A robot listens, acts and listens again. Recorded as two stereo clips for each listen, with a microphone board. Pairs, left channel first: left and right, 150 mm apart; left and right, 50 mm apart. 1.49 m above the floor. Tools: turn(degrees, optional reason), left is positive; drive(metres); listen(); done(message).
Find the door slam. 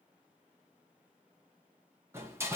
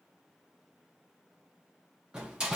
turn(degrees=-15, reason="The door slam: about 15° right or 165° right.")
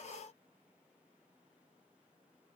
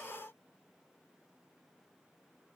listen()
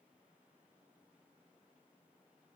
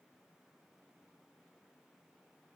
done("I heard a door slam, but can't make it out now. It was about straight ahead or 150° right.")